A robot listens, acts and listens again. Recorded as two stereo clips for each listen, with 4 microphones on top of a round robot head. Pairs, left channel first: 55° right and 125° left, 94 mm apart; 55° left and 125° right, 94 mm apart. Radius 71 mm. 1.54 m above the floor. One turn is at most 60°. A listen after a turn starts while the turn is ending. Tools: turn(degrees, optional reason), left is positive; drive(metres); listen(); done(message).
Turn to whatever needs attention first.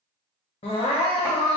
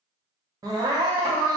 turn(degrees=-60, reason="The crying: 75° right.")
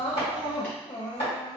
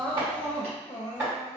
done("Found it: crying, straight ahead.")